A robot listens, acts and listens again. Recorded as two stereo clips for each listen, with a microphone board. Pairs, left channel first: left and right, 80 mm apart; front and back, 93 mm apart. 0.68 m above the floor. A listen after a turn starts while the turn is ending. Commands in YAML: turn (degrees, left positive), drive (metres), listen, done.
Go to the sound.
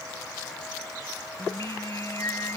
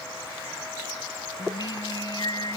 turn: 40
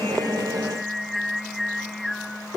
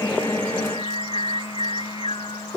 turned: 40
drive: 1.0
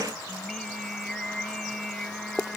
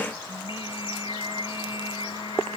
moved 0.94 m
drive: 1.0
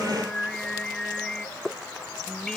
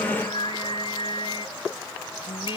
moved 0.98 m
turn: 10
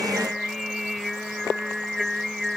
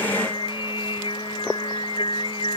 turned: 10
drive: 1.0
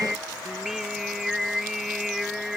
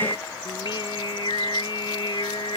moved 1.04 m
drive: 1.0
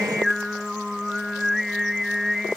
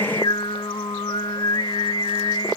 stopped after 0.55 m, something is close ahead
done: "Arrived at the singing, straight ahead."